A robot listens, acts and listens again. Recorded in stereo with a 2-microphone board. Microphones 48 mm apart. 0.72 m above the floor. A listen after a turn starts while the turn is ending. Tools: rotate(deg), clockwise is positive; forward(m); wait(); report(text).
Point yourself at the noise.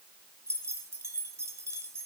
rotate(90)
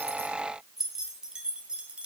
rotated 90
rotate(20)
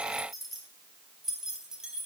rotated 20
rotate(15)
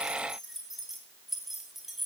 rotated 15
report("Facing the keys jangling.")